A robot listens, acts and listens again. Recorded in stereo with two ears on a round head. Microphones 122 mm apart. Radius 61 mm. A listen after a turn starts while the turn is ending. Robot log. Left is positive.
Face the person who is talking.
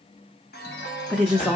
cmd yaw +30
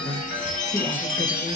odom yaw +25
cmd idle
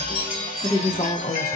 note: So it is at 150° left.
cmd yaw +150
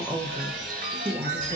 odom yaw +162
note: The woman speaking is now 15° right.
cmd yaw -15
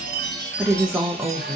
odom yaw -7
end: Facing the woman speaking.